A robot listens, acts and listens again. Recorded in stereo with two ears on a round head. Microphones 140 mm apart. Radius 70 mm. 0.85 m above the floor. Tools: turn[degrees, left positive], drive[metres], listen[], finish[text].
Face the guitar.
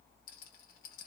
Action: listen[]
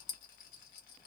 Action: listen[]
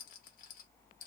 Action: finish[I can't make out a guitar to turn to.]